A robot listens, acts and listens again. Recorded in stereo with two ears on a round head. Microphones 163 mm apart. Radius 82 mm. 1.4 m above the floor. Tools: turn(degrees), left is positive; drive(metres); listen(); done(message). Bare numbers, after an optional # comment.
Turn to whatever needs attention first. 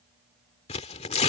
listen()
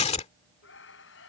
# The scream: about 75° left or 105° left.
turn(75)
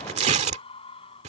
# So it is at 30° left.
turn(30)
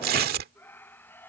# The scream is now 10° left.
turn(10)
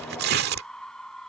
done("Facing the scream.")